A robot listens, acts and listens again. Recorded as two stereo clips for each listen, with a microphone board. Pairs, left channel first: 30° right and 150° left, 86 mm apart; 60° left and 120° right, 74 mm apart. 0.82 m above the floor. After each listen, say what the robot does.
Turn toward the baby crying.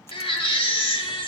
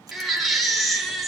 Turn 30° right.
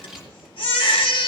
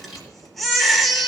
Turn 30° right.
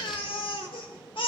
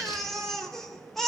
Turn 25° right.
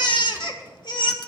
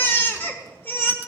Found it: a baby crying, straight ahead, 1 to 2 m away.